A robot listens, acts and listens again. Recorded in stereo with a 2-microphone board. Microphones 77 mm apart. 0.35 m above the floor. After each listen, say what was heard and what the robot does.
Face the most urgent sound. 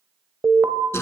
The alarm: about 25° right or 155° right. Turn 25° right.
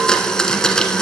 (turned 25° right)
Keep listening.
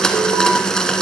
Keep listening.
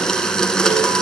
I heard an alarm, but can't make it out now. It was about straight ahead or 130° right.